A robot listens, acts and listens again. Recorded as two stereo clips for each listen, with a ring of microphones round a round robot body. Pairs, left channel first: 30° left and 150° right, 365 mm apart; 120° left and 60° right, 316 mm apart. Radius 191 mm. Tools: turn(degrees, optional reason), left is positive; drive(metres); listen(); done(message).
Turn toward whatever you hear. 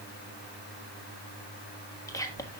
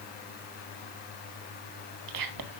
turn(degrees=-50, reason="The whispering: 50° right.")
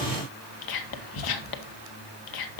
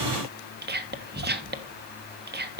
done("Facing the whispering.")